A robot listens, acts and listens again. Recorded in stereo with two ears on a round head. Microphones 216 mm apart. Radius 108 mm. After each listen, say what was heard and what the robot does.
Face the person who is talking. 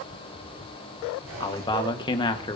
The man speaking: about 20° left or 160° left. Turn 20° left.
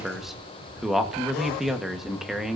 Found it: a man speaking, straight ahead.